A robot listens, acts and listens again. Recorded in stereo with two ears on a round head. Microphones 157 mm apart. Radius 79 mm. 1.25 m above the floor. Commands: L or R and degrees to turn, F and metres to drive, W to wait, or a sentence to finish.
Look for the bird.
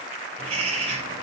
R35
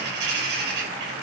R110
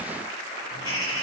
L25
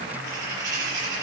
R20
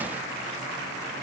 W
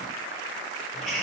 Found it: a bird, straight ahead, over 4 m away.